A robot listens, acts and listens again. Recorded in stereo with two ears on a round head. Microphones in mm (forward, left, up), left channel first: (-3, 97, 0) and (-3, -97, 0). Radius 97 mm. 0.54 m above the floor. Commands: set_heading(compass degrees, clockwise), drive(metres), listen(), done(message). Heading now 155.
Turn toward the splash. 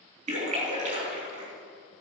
set_heading(190)
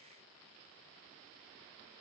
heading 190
listen()
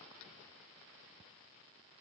done("I heard a splash, but can't make it out now. It was about straight ahead or 110° right.")